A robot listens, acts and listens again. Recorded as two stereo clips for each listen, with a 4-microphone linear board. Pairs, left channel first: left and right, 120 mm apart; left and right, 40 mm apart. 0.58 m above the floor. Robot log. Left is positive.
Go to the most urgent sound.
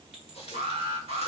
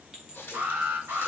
note: The alarm: about 55° right or 125° right.
cmd yaw -55
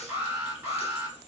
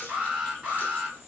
note: So it is at 15° right.
cmd yaw -15
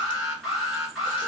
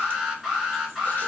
cmd fwd 1.0
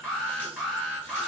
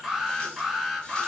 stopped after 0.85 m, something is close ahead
note: The alarm is now 10° left.
cmd yaw +10
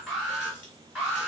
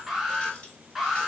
end: I am next to the alarm.